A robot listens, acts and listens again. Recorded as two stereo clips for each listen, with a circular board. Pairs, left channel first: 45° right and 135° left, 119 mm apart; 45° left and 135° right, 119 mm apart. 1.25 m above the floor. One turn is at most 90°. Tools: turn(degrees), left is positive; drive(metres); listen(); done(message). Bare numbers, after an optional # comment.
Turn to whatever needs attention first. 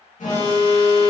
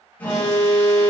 # The alarm: 30° right.
turn(-30)
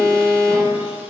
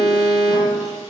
done("Facing the alarm, 1 to 2 m away.")